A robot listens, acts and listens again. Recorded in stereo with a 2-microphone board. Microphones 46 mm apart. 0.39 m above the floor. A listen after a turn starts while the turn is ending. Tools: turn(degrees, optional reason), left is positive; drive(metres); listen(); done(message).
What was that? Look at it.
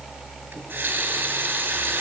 turn(degrees=-40, reason="The running tap: about 40° right or 140° right.")
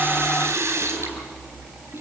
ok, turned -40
turn(degrees=-100, reason="So it is at 100° right.")
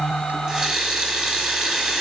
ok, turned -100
turn(degrees=-20, reason="The running tap is now 20° right.")
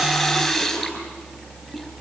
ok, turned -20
done("Facing the running tap.")